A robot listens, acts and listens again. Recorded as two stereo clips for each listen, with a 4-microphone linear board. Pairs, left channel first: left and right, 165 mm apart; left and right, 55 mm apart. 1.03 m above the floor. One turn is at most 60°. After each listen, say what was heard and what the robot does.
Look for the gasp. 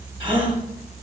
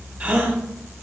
The gasp: about 30° right or 150° right. Turn 30° right.
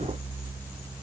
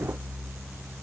Keep listening.
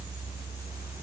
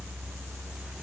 I heard a gasp, but can't make it out now. It was about straight ahead or 120° right.